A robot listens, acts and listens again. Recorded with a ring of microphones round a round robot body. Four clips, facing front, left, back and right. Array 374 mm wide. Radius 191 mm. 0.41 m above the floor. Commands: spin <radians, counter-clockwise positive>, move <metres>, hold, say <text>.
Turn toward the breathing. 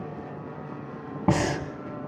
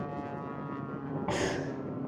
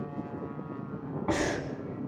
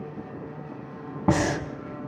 spin -0.79
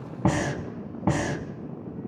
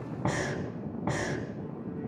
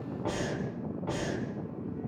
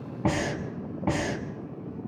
spin -0.17
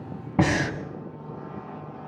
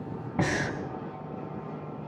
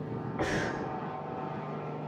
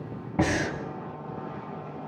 say Facing the breathing.